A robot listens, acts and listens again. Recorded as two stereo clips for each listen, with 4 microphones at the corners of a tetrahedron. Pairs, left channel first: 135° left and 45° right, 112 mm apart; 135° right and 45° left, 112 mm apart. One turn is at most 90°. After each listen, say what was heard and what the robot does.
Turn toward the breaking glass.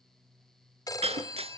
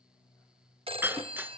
The breaking glass: 25° right. Turn 25° right.
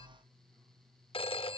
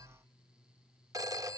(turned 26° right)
I heard breaking glass from this way, but can't make it out now.